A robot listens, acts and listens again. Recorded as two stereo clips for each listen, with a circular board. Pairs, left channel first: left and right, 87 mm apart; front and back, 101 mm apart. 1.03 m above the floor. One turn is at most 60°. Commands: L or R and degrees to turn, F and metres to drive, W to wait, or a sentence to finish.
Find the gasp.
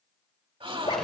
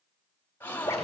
R60
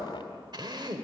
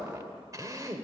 R15
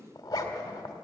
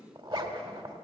Facing where the gasp came from. I can't hear it now.